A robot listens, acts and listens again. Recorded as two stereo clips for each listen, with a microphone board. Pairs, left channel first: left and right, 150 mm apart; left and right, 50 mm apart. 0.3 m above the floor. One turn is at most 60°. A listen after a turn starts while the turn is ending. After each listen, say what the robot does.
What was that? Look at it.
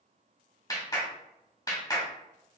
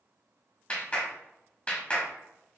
Turn 25° left.
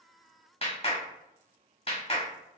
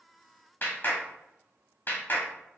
Turn 60° left.
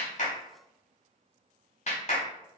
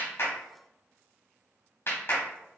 Turn 60° left.
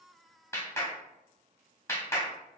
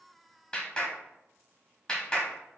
Turn 20° left.
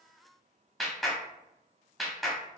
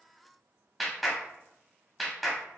Found it: a clap, straight ahead.